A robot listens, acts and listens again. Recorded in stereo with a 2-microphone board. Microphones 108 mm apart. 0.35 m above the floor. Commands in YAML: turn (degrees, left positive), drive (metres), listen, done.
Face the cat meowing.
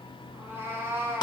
turn: -20
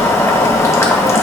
listen: true
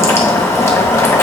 listen: true
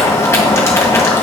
done: "I heard a cat meowing, but can't make it out now. It was about straight ahead or 140° right."